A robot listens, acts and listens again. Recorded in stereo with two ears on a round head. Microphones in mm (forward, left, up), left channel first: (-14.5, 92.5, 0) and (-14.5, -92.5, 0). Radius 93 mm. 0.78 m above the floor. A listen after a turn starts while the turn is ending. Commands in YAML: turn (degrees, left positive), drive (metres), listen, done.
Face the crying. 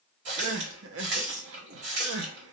turn: -65
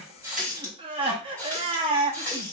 turn: -25
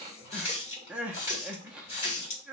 done: "Found it: crying, straight ahead, under 1 m away."